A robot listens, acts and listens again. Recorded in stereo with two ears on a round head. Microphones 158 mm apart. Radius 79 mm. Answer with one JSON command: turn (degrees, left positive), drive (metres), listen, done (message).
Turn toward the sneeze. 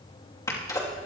{"turn": 20}
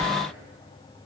{"listen": true}
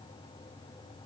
{"done": "I heard a sneeze, but can't make it out now. It was about straight ahead or 140° left."}